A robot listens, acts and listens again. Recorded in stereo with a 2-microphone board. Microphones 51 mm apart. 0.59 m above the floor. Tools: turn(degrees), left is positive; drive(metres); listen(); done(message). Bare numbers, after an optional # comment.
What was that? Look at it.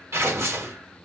# The tearing paper: about 60° right or 120° right.
turn(-60)
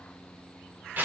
# So it is at 45° right.
turn(-45)
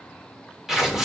# The tearing paper is now 10° right.
turn(-10)
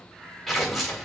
done("Found it: tearing paper, straight ahead.")